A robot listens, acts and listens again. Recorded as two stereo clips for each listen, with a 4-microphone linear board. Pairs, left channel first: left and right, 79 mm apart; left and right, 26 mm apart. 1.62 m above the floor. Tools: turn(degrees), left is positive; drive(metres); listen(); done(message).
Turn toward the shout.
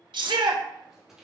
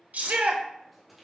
turn(degrees=-90)
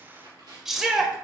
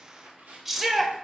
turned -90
done("Found it: a shout, straight ahead.")